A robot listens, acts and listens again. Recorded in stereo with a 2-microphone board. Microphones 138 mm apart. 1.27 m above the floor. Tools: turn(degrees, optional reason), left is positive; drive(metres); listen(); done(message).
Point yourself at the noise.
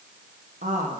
turn(degrees=-90)
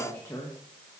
turn(degrees=25, reason="So it is at 25° left.")
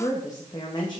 turn(degrees=35, reason="The woman speaking is now 35° left.")
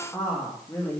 turn(degrees=20, reason="The woman speaking is now 20° left.")
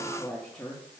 turn(degrees=15, reason="The woman speaking is now 15° left.")
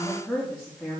turn(degrees=10, reason="The woman speaking is now 10° left.")
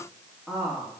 done("Facing the woman speaking.")